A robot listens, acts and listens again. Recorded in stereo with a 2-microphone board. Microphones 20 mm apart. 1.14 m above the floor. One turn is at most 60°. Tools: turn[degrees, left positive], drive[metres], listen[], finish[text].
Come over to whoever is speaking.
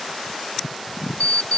Action: listen[]
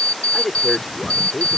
Thought: The man speaking: about 20° left or 160° left.
Action: turn[20]
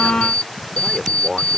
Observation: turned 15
Action: drive[1.0]
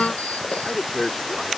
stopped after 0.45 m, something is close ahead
Thought: The man speaking is now 10° left.
Action: turn[10]
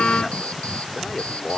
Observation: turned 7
Action: finish[Blocked. The man speaking is further on, straight ahead.]